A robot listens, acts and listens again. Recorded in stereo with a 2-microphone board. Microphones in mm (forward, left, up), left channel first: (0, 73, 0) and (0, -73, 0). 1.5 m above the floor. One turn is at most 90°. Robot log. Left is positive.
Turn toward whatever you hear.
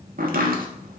cmd yaw -90
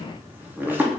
note: So it is at 15° right.
cmd yaw -15
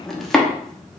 end: Found it: chopping, straight ahead.